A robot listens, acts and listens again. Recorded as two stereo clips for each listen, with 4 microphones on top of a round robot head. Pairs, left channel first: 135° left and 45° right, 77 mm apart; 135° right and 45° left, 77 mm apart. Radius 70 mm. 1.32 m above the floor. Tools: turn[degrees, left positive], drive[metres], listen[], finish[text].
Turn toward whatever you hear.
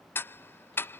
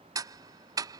Thought: The ticking: 75° left.
Action: turn[75]
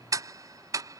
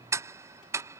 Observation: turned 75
Action: finish[Facing the ticking.]